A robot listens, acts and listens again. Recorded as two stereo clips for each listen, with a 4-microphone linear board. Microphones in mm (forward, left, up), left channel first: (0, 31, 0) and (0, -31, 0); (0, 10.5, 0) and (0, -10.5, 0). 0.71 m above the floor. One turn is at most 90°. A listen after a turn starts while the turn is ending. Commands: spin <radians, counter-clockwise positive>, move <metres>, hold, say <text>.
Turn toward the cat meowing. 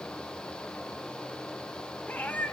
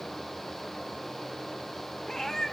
spin 0.44
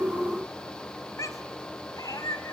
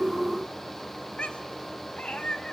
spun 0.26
spin 1.57
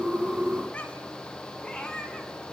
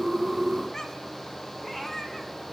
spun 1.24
spin 0.26
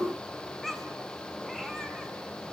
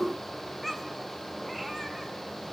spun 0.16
say Facing the cat meowing, 2 to 4 m away.